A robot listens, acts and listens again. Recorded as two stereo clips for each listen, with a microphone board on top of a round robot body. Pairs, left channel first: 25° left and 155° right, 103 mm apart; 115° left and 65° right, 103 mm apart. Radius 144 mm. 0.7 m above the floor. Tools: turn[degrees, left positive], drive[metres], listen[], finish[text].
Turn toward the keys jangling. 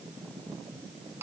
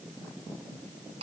Action: listen[]
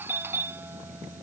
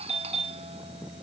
Action: listen[]
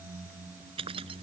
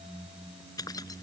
Thought: The keys jangling: 170° left.
Action: turn[170]
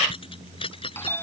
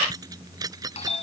Thought: The keys jangling is now 15° right.
Action: turn[-15]
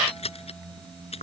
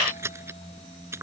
Action: finish[Facing the keys jangling.]